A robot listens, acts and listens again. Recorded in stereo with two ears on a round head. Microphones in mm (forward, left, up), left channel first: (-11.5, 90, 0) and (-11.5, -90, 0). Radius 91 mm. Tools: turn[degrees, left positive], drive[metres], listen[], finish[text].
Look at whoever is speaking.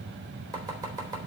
Action: listen[]
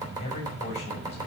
Thought: The man speaking: about 35° left or 145° left.
Action: turn[35]
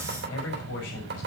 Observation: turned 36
Thought: So it is at 110° left.
Action: turn[110]
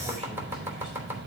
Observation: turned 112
Action: listen[]
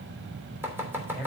Action: finish[Facing the man speaking, over 4 m away.]